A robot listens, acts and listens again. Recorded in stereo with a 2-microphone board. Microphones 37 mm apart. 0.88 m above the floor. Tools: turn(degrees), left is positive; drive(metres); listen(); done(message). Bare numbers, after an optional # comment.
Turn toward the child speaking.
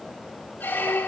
listen()
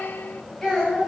turn(30)
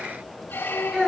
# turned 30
# So it is at 15° right.
turn(-15)
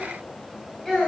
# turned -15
done("Facing the child speaking.")